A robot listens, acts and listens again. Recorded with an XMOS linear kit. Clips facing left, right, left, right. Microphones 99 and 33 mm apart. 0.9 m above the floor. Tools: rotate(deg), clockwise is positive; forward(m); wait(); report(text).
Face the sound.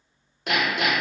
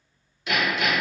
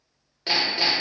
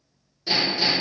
rotate(-60)
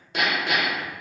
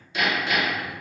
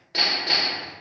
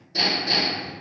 rotate(-65)
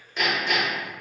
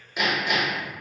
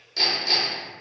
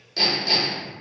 rotate(10)
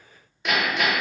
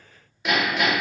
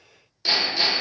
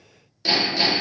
report("Found it: hammering, straight ahead, under 1 m away.")